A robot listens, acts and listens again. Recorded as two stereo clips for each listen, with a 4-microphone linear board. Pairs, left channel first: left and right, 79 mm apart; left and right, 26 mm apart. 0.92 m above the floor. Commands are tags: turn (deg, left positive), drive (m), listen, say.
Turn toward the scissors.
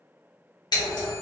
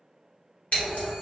<turn deg="65"/>
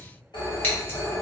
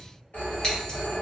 <listen/>
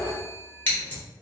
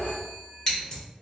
<turn deg="30"/>
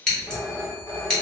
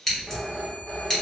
<turn deg="10"/>
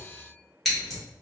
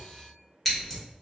<say>Found it: scissors, straight ahead, 1 to 2 m away.</say>